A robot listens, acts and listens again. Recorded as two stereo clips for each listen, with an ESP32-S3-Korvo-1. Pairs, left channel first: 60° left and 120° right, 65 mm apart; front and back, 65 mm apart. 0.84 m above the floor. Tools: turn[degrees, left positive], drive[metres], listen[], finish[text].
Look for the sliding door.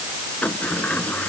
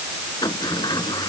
Thought: The sliding door: 10° right.
Action: turn[-10]
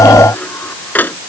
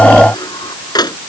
Action: finish[Facing the sliding door.]